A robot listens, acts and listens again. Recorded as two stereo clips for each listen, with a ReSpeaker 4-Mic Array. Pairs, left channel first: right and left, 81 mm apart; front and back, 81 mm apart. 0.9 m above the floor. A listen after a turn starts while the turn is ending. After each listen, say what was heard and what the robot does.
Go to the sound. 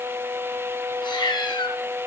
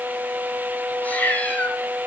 The cat meowing: 70° right. Turn 70° right.
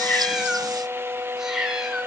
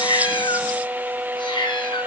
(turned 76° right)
Drive 1.0 m forward.
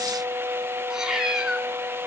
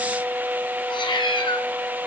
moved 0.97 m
The cat meowing is now 10° left. Turn 10° left.
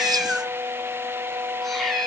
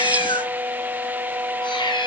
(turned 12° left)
Drive 1.0 m forward.
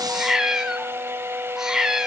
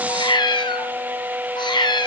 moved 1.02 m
Drive 1.0 m forward.
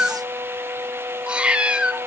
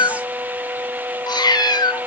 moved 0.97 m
The cat meowing is now 15° left. Turn 15° left.
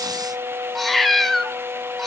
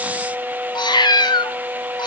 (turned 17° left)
Drive 1.0 m forward.
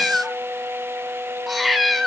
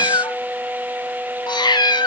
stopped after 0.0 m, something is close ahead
I am next to the cat meowing.